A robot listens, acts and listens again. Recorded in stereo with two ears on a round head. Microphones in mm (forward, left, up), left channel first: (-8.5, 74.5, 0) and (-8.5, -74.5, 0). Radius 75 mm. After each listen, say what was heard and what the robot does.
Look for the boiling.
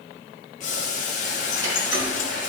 The boiling: about 45° left or 135° left. Turn 45° left.
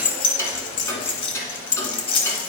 Keep listening.
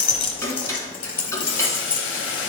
So it is at 85° left. Turn 85° left.
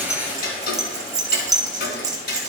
Keep listening.
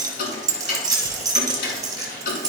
Keep listening.
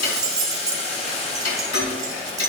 The boiling is now 35° left. Turn 35° left.
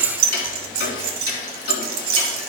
Keep listening.
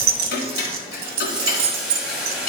Found it: boiling, straight ahead.